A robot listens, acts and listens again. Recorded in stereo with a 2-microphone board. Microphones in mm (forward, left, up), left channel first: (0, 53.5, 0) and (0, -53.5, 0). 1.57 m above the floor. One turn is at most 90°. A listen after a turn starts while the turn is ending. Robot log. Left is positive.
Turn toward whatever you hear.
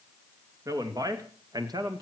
note: The man speaking: about 45° right or 135° right.
cmd yaw -45
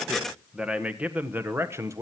note: So it is at 30° right.
cmd yaw -30
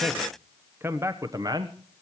note: The man speaking is now 40° right.
cmd yaw -40
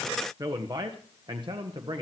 note: The man speaking is now 50° right.
cmd yaw -50
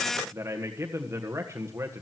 note: The man speaking is now 25° right.
cmd yaw -25
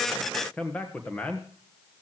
note: The man speaking is now 15° left.
cmd yaw +15
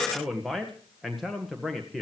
end: Facing the man speaking.